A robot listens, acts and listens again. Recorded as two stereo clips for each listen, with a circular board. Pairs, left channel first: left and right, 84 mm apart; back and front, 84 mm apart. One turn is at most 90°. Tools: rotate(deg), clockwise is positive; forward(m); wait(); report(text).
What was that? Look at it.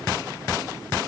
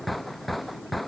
wait()
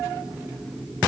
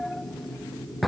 wait()
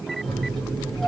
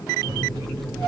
rotate(-10)
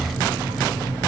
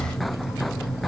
report("Found it: a microwave, straight ahead, 2 to 4 m away.")